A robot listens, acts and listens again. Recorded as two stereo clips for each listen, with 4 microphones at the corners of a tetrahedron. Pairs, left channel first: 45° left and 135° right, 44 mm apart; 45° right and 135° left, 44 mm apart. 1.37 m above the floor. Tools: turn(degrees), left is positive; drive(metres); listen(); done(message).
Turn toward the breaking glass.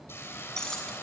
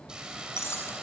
turn(degrees=-30)
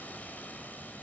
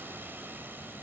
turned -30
done("Facing where the breaking glass came from. I can't hear it now.")